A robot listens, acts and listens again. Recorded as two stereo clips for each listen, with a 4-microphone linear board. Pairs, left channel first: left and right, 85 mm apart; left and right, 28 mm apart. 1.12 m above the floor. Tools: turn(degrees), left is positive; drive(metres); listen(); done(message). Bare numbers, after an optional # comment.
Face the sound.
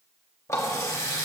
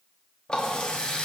# The running tap: about 35° left or 145° left.
turn(35)
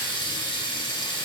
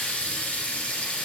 # So it is at 110° left.
turn(110)
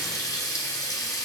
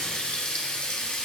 # The running tap is now 45° left.
turn(45)
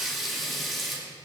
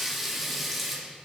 done("Facing the running tap.")